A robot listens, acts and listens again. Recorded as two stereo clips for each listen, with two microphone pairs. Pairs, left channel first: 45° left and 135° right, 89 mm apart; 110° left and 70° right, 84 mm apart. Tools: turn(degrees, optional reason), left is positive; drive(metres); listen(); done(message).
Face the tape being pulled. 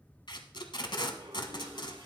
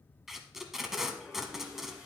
turn(degrees=15, reason="The tape being pulled: 15° left.")
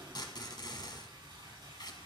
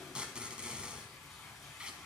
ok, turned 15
turn(degrees=10, reason="The tape being pulled is now 10° left.")
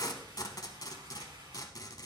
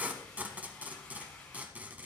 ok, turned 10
done("Found it: tape being pulled, straight ahead.")